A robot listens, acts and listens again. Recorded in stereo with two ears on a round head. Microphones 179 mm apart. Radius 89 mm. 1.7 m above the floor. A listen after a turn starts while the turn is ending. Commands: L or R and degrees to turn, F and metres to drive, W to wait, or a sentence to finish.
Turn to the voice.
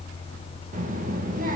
R45
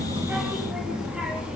Facing the child speaking.